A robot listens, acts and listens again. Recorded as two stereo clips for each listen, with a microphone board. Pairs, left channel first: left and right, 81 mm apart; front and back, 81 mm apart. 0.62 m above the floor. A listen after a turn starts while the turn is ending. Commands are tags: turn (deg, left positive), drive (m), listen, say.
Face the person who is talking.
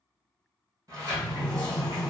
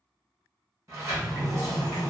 <listen/>
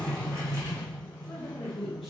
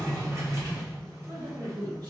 <turn deg="180"/>
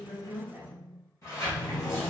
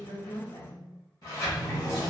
<turn deg="-10"/>
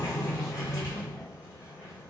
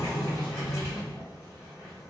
<listen/>
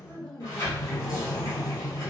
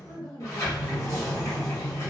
<say>Facing the woman speaking, 1 to 2 m away.</say>